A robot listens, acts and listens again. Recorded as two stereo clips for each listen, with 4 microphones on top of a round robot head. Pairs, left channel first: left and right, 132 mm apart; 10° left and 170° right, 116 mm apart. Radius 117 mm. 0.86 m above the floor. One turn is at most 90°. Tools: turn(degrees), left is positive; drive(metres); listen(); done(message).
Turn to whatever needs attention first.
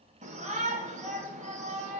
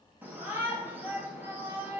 turn(degrees=-90)
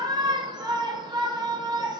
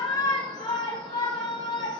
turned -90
turn(degrees=-40)
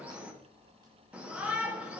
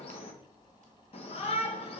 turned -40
turn(degrees=-10)
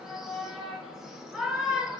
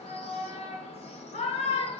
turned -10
done("Facing the shout, 1 to 2 m away.")